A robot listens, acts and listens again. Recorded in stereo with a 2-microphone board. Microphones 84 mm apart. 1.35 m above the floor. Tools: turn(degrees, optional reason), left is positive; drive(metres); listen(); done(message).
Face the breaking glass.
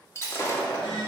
turn(degrees=35, reason="The breaking glass: about 35° left or 145° left.")
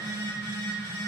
listen()
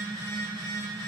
done("I heard breaking glass, but can't make it out now. It was about straight ahead or 110° left.")